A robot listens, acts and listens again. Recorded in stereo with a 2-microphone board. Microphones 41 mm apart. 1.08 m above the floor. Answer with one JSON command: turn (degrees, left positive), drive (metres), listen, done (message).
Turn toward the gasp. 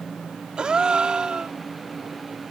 {"turn": -20}
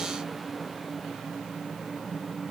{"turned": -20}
{"listen": true}
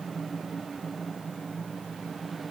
{"done": "I heard a gasp, but can't make it out now. It was about straight ahead or 140° right."}